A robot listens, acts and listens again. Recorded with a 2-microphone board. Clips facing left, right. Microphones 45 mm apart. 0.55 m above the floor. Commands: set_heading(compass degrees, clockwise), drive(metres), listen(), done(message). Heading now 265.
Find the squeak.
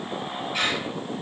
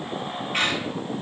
set_heading(315)
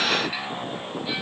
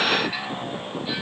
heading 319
listen()
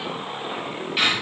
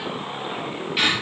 done("Facing the squeak, over 4 m away.")